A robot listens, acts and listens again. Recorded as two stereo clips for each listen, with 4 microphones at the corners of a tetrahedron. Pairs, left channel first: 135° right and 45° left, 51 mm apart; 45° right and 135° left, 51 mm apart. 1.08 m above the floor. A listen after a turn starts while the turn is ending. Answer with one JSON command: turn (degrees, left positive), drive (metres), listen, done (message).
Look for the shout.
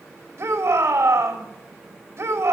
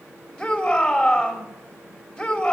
{"turn": 30}
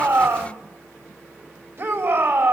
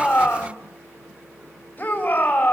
{"turn": 10}
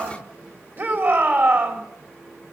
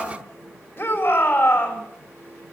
{"done": "Facing the shout, 2 to 4 m away."}